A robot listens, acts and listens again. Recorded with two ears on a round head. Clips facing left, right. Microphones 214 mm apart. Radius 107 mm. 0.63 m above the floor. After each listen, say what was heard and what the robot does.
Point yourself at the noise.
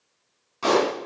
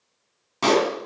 The pop: about 75° right or 105° right. Turn 75° right.
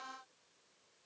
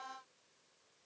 Keep listening.
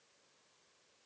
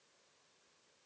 I heard a pop, but can't make it out now. It was about straight ahead or 30° right.